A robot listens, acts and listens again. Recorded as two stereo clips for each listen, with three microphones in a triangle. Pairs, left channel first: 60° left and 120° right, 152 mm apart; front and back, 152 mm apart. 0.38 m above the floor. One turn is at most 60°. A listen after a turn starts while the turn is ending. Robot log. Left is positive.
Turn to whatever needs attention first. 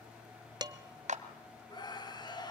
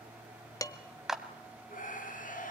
end: Found it: a scream, straight ahead.